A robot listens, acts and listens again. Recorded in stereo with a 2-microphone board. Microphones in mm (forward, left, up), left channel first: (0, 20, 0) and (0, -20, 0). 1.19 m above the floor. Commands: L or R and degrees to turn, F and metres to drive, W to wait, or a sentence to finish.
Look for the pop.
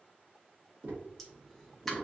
L30
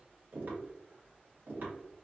W
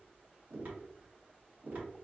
I heard a pop, but can't make it out now. It was about 25° right or 145° left.